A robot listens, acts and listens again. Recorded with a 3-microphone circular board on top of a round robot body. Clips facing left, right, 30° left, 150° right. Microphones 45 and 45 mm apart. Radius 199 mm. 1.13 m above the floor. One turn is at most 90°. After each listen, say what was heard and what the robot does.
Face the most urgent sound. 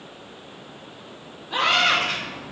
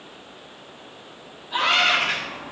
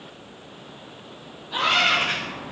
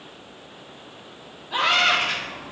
The scream: 130° left. Turn 90° left.
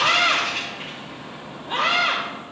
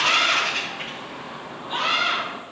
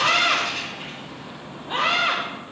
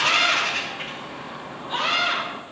The scream is now 35° left. Turn 35° left.
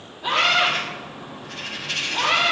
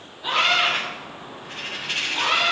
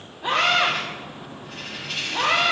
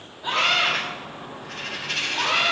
Facing the scream, 2 to 4 m away.